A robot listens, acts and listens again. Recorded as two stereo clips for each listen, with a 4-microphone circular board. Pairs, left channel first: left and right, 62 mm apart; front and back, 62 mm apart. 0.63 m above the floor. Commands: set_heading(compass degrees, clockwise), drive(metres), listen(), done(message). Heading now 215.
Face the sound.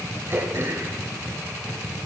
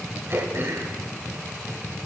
set_heading(350)
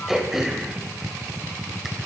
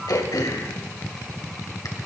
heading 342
done("Found it: throat clearing, straight ahead.")